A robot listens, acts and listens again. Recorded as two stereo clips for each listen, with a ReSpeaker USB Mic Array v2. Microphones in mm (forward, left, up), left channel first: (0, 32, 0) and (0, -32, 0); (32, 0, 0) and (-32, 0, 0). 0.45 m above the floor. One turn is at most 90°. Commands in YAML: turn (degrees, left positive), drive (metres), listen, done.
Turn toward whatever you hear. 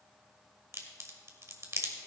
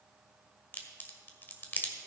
turn: -55
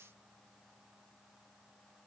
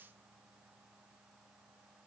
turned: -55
done: "I heard a crack from this way, but can't make it out now."